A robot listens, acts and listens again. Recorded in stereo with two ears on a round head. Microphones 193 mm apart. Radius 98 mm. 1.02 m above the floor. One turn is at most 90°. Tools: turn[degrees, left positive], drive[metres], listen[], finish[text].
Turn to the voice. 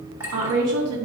Action: turn[-90]
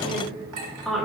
Action: finish[Facing the woman speaking, 1 to 2 m away.]